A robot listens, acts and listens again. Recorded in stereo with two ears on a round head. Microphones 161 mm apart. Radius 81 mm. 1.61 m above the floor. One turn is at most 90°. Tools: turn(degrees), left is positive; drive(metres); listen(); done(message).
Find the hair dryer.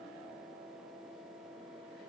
listen()
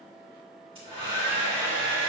turn(degrees=-30)
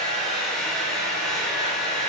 done("Found it: a hair dryer, straight ahead.")